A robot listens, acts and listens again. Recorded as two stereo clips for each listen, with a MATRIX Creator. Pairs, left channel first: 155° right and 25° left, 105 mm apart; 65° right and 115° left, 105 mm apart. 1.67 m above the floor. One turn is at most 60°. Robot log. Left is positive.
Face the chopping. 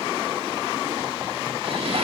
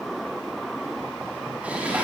cmd idle
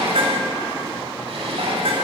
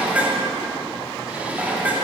cmd idle
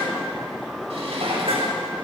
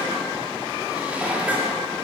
end: I can't make out chopping, only dishes clattering.